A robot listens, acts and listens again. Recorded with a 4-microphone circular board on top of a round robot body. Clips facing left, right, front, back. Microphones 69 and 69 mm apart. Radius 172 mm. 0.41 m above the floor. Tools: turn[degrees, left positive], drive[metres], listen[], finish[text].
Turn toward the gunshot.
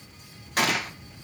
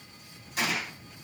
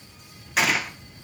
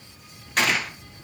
Thought: The gunshot: 85° left.
Action: turn[85]
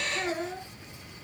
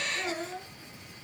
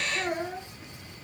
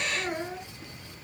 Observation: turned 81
Action: finish[I heard a gunshot from this way, but can't make it out now.]